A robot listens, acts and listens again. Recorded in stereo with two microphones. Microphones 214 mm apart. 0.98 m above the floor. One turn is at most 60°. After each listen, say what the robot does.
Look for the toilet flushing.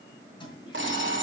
Turn 20° left.
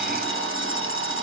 Keep listening.
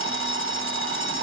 Keep listening.
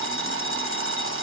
I heard a toilet flushing, but can't make it out now. It was about straight ahead or 140° left.